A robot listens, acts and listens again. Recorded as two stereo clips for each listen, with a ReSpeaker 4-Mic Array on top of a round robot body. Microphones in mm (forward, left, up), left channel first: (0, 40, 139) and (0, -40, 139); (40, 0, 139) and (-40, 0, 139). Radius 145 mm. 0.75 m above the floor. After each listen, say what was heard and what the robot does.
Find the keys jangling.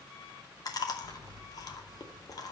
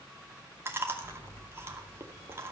The keys jangling: 50° right. Turn 50° right.
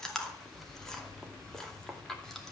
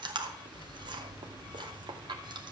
Keep listening.
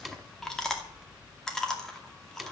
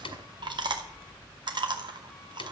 Facing the keys jangling.